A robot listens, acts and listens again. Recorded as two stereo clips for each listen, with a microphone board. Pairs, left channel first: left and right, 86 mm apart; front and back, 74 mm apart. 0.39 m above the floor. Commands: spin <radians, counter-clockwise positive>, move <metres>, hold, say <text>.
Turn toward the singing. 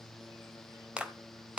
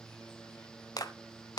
hold
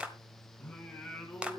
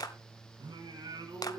spin 3.05
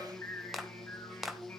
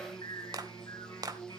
spin 0.52
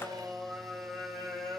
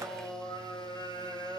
say Found it: singing, straight ahead.